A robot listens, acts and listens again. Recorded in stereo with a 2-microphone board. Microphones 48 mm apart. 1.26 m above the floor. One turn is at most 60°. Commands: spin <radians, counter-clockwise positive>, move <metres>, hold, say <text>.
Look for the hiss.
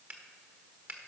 hold
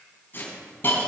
spin 0.79
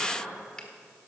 hold
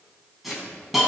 say Facing the hiss, 2 to 4 m away.